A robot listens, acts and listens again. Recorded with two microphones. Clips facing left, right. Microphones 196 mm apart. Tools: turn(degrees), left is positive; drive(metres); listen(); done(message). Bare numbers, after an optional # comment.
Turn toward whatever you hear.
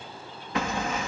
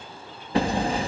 # The hammering: about 30° right or 150° right.
turn(-30)
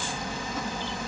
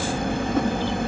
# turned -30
# So it is at 120° right.
turn(-120)
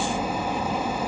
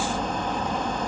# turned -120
# The hammering is now 10° left.
turn(10)
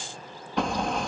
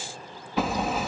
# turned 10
done("Found it: hammering, straight ahead.")